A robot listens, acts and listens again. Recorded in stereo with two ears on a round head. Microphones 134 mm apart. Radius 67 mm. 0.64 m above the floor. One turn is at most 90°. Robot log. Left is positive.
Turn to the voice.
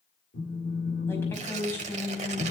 note: The woman speaking: about 15° left or 165° left.
cmd yaw +15
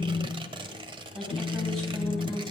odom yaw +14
end: Found it: a woman speaking, straight ahead.